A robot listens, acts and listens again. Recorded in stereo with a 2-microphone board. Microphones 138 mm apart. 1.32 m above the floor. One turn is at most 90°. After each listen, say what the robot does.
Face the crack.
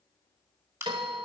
Turn 20° right.
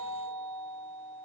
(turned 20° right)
Keep listening.
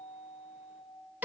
I heard a crack, but can't make it out now. It was about straight ahead or 140° right.